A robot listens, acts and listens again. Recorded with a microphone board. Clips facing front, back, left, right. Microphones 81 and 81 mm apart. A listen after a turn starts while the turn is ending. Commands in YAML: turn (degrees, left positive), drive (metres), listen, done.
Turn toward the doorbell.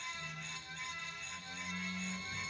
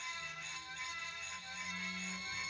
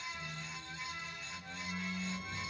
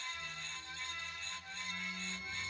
listen: true
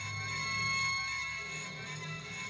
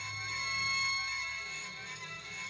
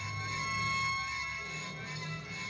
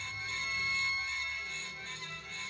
listen: true
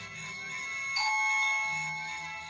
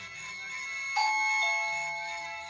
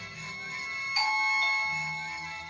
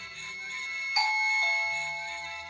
turn: -165
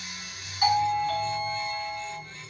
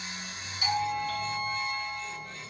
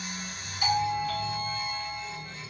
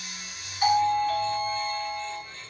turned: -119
turn: -45
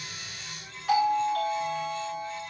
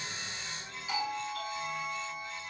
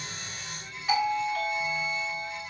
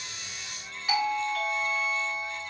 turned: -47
done: "Facing the doorbell."